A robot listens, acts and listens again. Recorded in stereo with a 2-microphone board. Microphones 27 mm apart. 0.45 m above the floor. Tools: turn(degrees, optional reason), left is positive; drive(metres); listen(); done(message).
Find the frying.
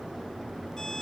listen()
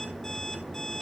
listen()
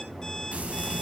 turn(degrees=-65, reason="The frying: about 65° right or 115° right.")
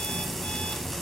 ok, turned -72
done("Found it: frying, straight ahead.")